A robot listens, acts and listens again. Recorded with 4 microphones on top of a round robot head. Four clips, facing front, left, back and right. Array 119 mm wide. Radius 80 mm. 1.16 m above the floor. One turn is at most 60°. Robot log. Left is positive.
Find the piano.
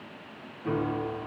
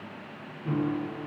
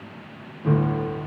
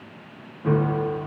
note: The piano: 115° right.
cmd yaw -60
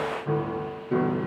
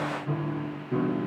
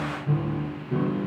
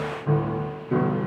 note: The piano is now 60° right.
cmd yaw -60
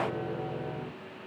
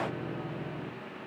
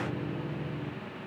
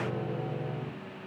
note: The piano is now 35° right.
cmd yaw -35
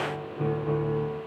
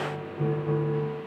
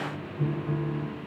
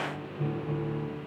note: The piano is now 25° left.
cmd yaw +25
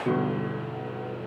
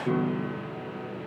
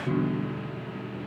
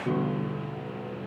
end: Found it: a piano, straight ahead, 1 to 2 m away.